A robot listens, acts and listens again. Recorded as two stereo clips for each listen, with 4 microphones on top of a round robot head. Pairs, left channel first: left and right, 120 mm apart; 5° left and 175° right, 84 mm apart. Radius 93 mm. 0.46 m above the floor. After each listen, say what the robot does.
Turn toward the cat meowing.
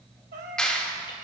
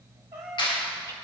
Turn 105° right.
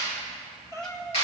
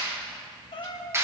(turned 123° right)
Turn 25° left.
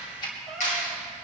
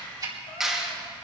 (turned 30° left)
Facing the cat meowing, 1 to 2 m away.